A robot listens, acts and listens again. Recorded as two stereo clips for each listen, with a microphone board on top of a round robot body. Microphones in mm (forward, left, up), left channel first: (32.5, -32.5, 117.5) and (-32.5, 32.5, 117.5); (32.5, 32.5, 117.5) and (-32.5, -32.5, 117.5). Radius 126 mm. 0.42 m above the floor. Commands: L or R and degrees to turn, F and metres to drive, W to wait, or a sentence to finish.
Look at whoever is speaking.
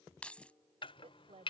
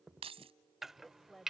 L130
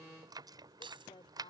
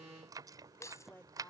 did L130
R25
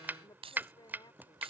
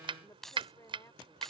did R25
R10
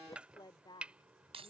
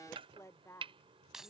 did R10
R15
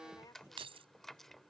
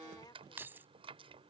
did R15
W
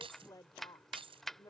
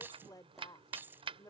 Found it: a woman speaking, straight ahead.